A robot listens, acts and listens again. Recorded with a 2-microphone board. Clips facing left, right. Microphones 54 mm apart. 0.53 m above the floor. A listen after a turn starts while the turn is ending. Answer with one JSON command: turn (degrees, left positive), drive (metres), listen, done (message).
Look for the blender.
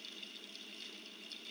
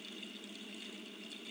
{"listen": true}
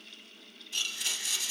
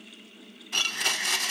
{"turn": -65}
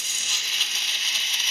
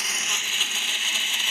{"turn": -10}
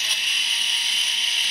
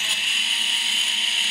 {"done": "Facing the blender, under 1 m away."}